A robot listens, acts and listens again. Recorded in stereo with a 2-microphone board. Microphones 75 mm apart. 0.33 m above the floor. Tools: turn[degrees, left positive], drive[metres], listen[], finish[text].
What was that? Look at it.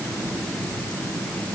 Action: listen[]
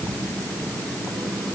Action: listen[]
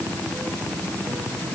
Action: finish[I can't make out anything.]